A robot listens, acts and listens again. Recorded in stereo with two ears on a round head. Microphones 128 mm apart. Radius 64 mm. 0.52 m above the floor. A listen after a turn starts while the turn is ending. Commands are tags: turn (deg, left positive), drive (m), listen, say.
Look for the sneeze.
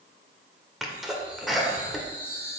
<turn deg="30"/>
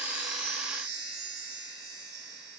<listen/>
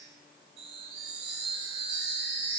<say>I heard a sneeze, but can't make it out now. It was about 30° right or 150° left.</say>